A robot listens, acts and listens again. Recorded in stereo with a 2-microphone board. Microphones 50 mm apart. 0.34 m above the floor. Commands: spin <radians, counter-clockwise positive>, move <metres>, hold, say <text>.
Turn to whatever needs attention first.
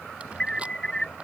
spin 0.52
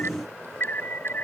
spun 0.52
spin 2.36
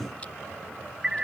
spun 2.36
spin -0.26
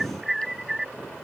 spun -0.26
say Facing the alarm.